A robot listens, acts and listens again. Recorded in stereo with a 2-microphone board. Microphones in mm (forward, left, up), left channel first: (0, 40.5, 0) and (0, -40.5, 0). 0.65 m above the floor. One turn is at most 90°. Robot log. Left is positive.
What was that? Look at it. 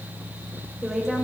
cmd yaw +30
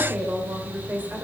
note: So it is at 20° right.
cmd yaw -20
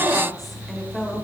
note: The woman speaking is now 10° left.
cmd yaw +10
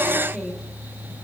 end: Facing the woman speaking.